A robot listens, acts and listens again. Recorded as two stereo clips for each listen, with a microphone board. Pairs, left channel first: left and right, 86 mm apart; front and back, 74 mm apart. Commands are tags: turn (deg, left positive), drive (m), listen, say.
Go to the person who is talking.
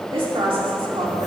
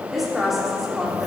<turn deg="-90"/>
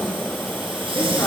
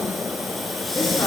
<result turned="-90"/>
<listen/>
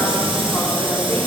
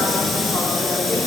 <listen/>
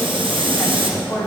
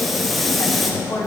<turn deg="35"/>
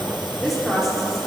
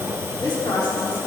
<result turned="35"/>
<drive m="1.0"/>
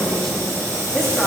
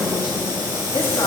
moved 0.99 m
<drive m="1.0"/>
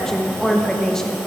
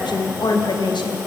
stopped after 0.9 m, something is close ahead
<say>I am next to the woman speaking.</say>